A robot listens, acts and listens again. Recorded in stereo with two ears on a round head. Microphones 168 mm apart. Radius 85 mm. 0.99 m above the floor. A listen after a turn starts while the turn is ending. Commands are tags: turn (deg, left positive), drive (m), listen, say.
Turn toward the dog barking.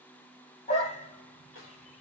<turn deg="35"/>
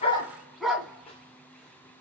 <say>Facing the dog barking, 2 to 4 m away.</say>